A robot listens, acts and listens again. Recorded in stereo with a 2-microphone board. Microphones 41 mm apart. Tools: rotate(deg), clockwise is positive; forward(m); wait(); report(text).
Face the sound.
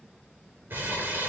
rotate(55)
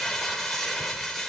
report("Found it: crumpling, straight ahead, over 4 m away.")